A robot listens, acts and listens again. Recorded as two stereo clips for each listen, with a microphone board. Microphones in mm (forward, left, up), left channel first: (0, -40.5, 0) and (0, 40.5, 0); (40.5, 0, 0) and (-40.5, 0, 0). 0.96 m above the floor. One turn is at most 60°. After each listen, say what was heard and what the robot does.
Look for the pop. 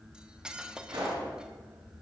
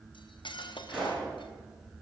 The pop: 95° left. Turn 60° left.
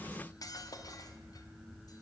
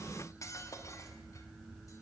Nothing new. It was at 35° left. Turn 35° left.
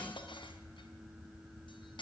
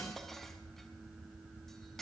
I heard a pop from this way, but can't make it out now.